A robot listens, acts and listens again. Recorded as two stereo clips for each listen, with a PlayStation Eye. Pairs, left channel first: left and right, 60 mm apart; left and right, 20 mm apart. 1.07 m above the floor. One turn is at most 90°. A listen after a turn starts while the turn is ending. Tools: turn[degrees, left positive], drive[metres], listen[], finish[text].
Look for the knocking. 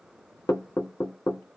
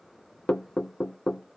Thought: The knocking: about 75° left or 105° left.
Action: turn[75]
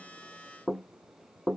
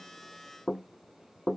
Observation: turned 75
Action: finish[Found it: knocking, straight ahead, under 1 m away.]